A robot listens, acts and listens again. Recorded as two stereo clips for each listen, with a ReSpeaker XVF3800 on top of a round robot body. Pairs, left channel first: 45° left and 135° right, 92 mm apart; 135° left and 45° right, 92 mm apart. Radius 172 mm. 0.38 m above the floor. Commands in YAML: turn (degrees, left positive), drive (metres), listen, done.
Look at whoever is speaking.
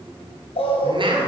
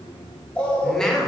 turn: -140
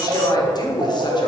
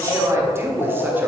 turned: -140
turn: 15
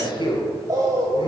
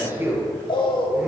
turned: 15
turn: 20
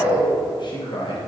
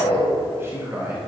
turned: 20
turn: 20
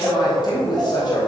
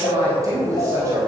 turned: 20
turn: 10
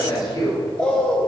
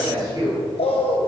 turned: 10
done: "Facing the man speaking."